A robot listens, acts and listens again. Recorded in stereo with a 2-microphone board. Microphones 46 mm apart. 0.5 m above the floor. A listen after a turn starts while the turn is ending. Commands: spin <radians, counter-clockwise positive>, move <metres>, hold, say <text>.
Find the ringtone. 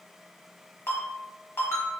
spin 1.05
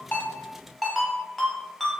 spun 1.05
say Found it: a ringtone, straight ahead.